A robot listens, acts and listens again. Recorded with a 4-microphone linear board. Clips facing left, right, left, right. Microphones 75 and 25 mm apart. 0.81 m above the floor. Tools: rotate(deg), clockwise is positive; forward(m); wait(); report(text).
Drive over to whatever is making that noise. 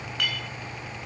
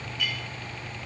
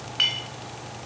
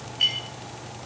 rotate(-70)
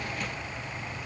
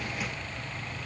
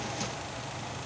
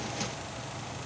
wait()
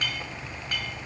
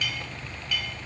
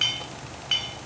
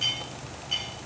rotate(-40)
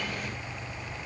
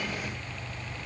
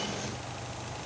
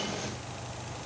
wait()
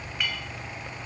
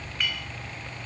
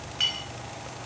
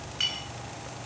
forward(1.0)
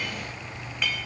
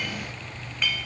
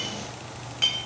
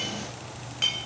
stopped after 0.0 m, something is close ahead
report("Blocked. The clink is further on, straight ahead.")